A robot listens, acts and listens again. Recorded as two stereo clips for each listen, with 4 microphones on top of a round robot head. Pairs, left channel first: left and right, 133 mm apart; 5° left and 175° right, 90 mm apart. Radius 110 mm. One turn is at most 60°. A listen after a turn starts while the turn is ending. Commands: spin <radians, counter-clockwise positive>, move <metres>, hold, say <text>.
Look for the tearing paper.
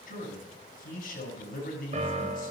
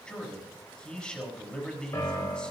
hold
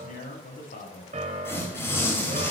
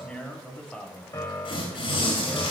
spin 0.35
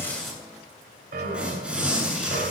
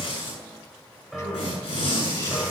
spin -0.17
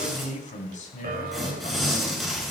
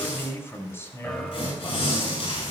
say Found it: tearing paper, straight ahead.